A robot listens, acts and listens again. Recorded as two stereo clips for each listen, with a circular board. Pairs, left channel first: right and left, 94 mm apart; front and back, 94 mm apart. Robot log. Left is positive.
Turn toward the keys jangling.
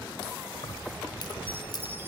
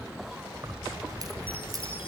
note: The keys jangling: 130° right.
cmd yaw -130
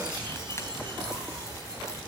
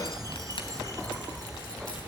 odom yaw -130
note: The keys jangling is now 30° right.
cmd yaw -30
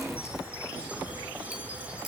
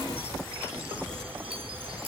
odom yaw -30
cmd idle
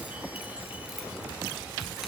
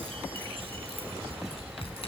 cmd idle
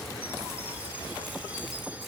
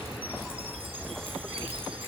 end: Facing where the keys jangling came from. I can't hear it now.